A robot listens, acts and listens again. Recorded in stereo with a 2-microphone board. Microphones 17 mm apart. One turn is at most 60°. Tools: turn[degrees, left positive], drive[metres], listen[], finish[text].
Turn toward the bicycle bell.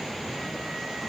Action: listen[]
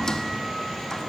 Action: listen[]
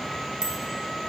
Thought: The bicycle bell: about 60° right or 120° right.
Action: turn[-60]
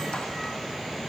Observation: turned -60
Action: listen[]
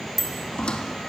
Action: finish[Found it: a bicycle bell, straight ahead, 2 to 4 m away.]